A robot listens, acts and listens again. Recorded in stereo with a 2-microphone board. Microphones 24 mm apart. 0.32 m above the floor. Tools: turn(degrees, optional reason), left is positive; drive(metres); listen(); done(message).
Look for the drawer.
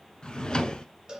turn(degrees=30, reason="The drawer: about 30° left or 150° left.")
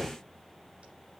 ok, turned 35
done("Found it: a drawer, straight ahead.")